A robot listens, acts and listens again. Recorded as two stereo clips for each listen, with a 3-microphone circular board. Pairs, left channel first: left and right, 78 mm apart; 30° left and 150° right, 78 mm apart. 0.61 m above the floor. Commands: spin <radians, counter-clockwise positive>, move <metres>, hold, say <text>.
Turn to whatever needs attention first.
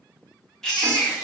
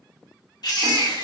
spin 0.17
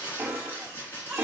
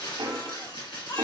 say Facing the baby crying.